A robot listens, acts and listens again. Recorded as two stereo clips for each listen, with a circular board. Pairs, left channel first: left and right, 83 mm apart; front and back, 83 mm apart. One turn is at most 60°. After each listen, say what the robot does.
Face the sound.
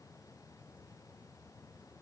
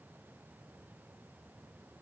Keep listening.
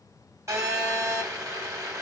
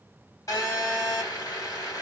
Turn 45° right.
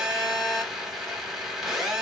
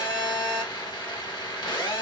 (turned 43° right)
Facing the phone buzzing, 1 to 2 m away.